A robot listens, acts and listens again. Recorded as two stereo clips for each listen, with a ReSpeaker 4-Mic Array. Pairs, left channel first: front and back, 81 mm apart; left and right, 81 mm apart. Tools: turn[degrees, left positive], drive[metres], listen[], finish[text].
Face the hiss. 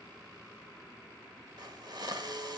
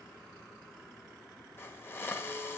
Thought: The hiss: 150° left.
Action: turn[150]
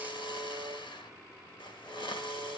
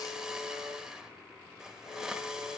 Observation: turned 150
Action: finish[Facing the hiss, 1 to 2 m away.]